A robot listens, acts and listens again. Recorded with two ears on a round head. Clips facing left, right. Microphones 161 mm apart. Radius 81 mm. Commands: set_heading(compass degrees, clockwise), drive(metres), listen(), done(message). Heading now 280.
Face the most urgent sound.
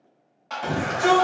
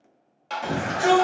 set_heading(310)
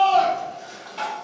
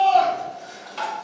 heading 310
done("Found it: a shout, straight ahead, 1 to 2 m away.")